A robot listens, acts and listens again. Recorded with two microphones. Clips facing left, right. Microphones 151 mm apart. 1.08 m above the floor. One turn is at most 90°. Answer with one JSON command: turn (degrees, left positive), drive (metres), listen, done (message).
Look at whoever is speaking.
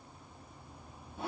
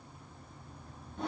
{"listen": true}
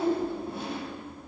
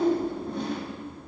{"listen": true}
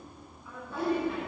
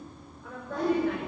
{"turn": -70}
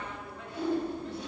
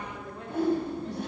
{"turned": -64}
{"turn": -40}
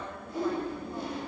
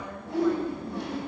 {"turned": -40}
{"done": "Found it: a woman speaking, straight ahead."}